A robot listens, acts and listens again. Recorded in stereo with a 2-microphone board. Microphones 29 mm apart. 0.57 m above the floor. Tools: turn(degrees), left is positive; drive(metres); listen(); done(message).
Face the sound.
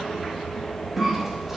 turn(degrees=-30)
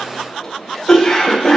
turn(degrees=15)
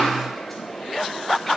listen()
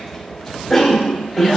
done("Facing the cough.")